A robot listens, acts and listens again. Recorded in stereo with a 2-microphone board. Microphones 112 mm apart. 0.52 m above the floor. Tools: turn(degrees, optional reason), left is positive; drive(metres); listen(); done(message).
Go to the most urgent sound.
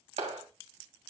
listen()
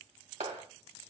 listen()
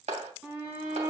turn(degrees=-20, reason="The shout: about 20° right or 160° right.")
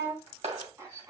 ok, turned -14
turn(degrees=-150, reason="So it is at 150° right.")
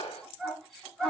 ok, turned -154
drive(metres=1.0)
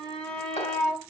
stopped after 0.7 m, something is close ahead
turn(degrees=10, reason="The shout is now 10° left.")
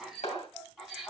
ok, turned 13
done("Something is in my way. I am facing the shout but have not reached it.")